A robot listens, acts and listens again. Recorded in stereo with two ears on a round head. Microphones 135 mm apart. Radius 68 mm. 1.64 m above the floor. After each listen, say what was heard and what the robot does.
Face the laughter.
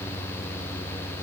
Keep listening.
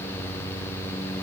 Keep listening.
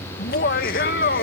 The laughter: about 60° left or 120° left. Turn 60° left.
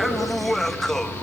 Facing the laughter.